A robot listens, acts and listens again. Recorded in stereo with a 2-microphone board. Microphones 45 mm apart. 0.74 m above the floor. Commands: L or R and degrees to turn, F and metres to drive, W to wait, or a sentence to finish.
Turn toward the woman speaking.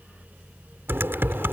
W
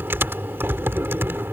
W
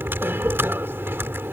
I can't make out a woman speaking to turn to.